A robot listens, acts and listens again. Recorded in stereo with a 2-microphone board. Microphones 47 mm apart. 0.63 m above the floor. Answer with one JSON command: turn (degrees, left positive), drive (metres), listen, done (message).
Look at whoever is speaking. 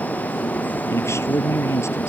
{"turn": 75}
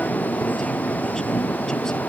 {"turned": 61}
{"listen": true}
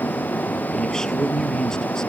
{"turn": 15}
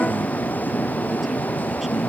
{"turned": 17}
{"done": "Facing the man speaking."}